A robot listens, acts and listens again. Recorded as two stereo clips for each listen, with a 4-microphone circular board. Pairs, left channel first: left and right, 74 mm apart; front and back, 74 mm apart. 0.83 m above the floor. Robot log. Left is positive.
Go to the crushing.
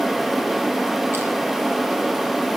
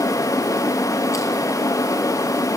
cmd idle
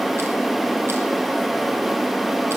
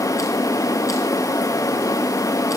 cmd idle
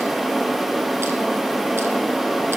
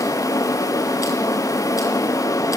end: I can't make out crushing.